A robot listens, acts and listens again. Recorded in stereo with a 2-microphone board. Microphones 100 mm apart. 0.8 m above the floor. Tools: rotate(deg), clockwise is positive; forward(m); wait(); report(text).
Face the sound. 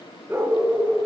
rotate(20)
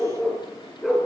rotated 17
rotate(-30)
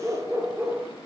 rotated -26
rotate(25)
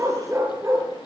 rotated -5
rotate(30)
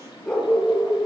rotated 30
report("Facing the dog barking.")